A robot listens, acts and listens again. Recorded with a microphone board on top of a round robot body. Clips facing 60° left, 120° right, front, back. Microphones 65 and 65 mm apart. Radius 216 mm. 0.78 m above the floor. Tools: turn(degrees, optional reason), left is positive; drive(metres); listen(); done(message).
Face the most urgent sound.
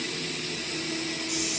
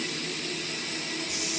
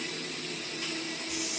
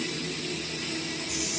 listen()
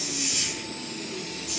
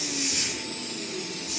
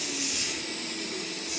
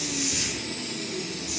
listen()
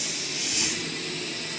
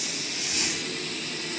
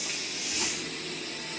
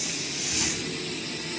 done("I can't make out anything urgent, only a hiss.")